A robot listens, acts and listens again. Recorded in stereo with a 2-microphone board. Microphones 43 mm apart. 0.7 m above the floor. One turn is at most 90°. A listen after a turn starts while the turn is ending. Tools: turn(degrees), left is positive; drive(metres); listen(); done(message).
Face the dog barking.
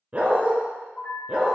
turn(degrees=-25)
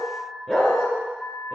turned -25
turn(degrees=10)
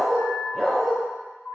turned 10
done("Facing the dog barking.")